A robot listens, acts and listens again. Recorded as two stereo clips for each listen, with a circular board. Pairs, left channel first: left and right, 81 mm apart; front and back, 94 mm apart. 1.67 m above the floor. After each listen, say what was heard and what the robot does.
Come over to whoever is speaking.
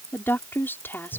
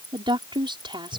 The woman speaking: 155° left. Turn 155° left.
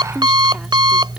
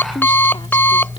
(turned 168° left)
Nothing new. It was at 15° right. Turn 15° right.
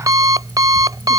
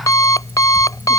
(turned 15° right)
Keep listening.
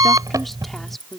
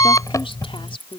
Drive 1.0 m forward.
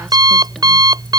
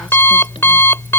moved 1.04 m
Keep listening.
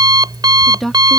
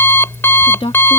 Drive 1.0 m forward.
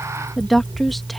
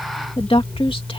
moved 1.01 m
Drive 1.0 m forward.
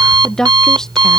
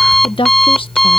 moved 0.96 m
Drive 1.0 m forward.
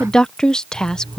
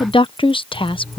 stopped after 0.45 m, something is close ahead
The woman speaking is now 10° left. Turn 10° left.
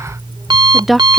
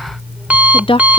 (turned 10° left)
Arrived at the woman speaking, straight ahead.